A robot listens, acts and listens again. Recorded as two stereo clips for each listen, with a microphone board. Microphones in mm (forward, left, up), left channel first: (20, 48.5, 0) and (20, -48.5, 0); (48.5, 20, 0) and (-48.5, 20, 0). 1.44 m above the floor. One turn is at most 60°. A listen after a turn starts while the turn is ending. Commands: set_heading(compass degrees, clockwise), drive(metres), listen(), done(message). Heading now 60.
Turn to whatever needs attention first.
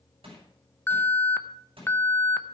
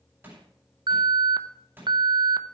set_heading(0)
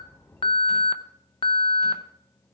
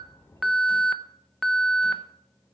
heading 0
set_heading(300)
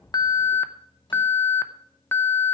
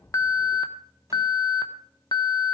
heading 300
set_heading(270)
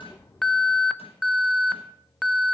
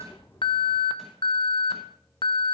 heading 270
done("Found it: an alarm, straight ahead.")